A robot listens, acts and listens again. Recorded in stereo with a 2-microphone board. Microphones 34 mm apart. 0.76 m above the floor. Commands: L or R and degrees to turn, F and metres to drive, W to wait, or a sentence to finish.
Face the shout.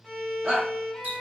R30
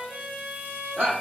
R115
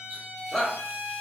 Facing the shout.